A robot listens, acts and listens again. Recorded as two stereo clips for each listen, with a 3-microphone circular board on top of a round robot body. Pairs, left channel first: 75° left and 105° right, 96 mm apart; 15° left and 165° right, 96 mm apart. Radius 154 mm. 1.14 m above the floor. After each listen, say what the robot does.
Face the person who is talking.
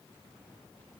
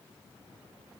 Keep listening.
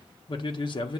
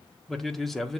Turn 105° left.
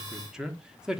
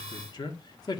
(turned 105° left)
Turn 25° right.
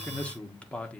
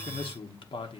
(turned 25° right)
Found it: a man speaking, straight ahead.